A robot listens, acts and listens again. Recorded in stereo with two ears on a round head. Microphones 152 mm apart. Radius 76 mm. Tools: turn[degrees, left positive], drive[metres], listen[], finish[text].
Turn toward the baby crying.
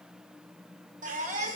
Thought: The baby crying: about 45° right or 135° right.
Action: turn[-45]
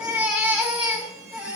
Thought: So it is at 10° right.
Action: turn[-10]
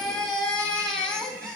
Action: finish[Facing the baby crying.]